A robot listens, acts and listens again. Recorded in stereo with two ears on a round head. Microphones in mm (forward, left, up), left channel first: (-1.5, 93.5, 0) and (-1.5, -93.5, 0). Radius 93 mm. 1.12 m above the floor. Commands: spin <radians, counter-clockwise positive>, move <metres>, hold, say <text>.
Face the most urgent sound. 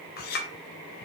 hold
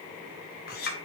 hold
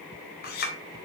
say I can't make out anything urgent to turn to.